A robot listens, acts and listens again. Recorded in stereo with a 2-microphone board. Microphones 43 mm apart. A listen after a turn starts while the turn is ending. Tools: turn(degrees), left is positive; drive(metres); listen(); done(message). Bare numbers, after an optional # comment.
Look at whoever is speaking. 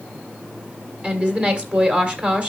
# The woman speaking: about 25° right or 155° right.
turn(-25)
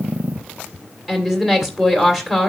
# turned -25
done("Facing the woman speaking.")